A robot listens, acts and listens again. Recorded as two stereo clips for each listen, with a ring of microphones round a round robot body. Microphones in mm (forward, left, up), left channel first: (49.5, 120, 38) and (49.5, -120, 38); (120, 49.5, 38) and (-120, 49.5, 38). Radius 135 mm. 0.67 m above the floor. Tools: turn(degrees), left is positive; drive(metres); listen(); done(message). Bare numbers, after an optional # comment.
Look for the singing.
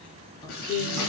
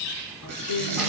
# The singing: 15° left.
turn(15)
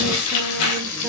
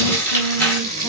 listen()
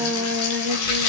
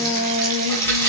# The singing is now 20° right.
turn(-20)
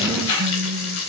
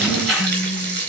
# The singing is now 20° right.
turn(-20)
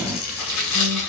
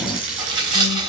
listen()
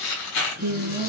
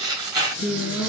# The singing is now 40° right.
turn(-40)
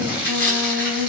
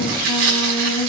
done("Found it: singing, straight ahead.")